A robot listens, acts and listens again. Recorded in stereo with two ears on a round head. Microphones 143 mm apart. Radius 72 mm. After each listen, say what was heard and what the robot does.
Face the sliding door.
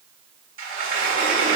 The sliding door: about 55° right or 125° right. Turn 55° right.
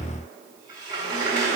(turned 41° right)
So it is at 30° right. Turn 30° right.
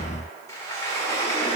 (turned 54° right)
The sliding door is now 25° left. Turn 25° left.
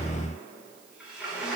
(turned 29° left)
Found it: a sliding door, straight ahead.